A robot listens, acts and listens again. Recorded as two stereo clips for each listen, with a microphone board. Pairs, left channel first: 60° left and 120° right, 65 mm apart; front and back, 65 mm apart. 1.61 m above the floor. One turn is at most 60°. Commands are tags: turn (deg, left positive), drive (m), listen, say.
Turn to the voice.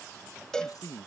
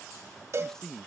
<turn deg="60"/>
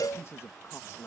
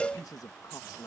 <turn deg="15"/>
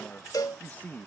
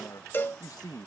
<say>Facing the man speaking.</say>